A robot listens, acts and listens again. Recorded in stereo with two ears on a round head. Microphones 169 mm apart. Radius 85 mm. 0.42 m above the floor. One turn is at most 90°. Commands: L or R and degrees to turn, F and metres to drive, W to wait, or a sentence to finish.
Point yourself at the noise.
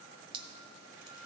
R25
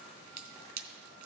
R90
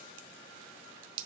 R70
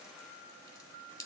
L15
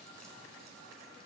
W
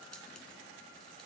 W
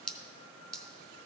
Found it: dripping, straight ahead, under 1 m away.